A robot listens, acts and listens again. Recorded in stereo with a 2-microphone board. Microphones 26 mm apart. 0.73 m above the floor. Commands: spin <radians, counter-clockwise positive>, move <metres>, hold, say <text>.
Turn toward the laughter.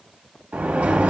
hold
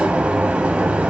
hold
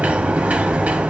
say I can't make out laughter to turn to.